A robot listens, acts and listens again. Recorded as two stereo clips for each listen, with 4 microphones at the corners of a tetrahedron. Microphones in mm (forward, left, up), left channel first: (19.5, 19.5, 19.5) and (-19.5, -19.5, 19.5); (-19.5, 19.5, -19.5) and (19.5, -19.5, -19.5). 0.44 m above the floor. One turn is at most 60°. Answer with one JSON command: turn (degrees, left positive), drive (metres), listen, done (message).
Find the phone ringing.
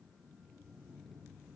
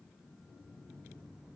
{"listen": true}
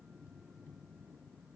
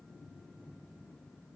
{"listen": true}
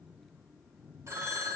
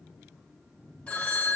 {"turn": -60}
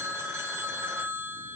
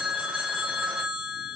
{"turn": -60}
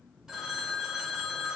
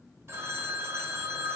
{"turn": -55}
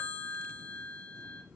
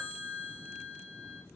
{"done": "Found it: a phone ringing, straight ahead, under 1 m away."}